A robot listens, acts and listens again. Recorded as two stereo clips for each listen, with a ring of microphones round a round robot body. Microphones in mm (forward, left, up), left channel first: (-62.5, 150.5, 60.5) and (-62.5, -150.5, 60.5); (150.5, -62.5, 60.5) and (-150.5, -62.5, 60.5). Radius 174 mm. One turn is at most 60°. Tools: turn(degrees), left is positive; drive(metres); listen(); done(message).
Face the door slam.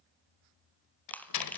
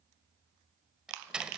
turn(degrees=60)
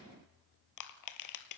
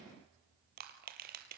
turn(degrees=35)
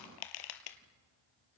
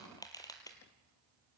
done("I heard a door slam from this way, but can't make it out now.")